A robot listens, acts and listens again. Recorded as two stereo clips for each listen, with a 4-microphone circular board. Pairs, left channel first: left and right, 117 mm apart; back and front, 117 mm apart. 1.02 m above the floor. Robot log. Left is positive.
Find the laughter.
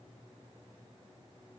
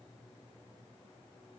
cmd idle
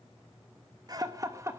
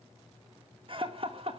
note: The laughter: 25° right.
cmd yaw -25
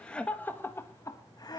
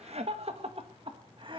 note: The laughter is now 40° left.
cmd yaw +40
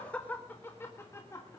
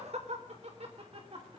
note: The laughter is now 30° left.
cmd yaw +30
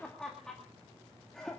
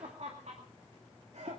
end: Found it: laughter, straight ahead.